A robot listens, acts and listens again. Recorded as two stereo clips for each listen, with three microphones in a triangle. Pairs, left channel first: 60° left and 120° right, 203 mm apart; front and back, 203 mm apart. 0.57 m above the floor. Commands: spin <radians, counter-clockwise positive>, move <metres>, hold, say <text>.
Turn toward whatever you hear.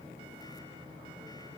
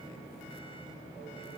hold
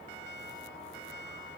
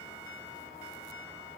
hold
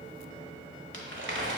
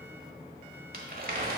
spin -2.44
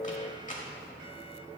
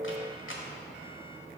say Found it: crumpling, straight ahead.